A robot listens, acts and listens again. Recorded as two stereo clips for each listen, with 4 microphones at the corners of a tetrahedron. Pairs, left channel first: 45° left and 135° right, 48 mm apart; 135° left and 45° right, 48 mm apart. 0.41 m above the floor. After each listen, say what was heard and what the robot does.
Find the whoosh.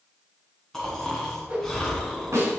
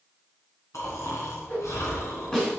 The whoosh: 165° left. Turn 165° left.
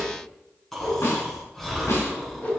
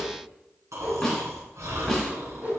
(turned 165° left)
Found it: a whoosh, straight ahead, 2 to 4 m away.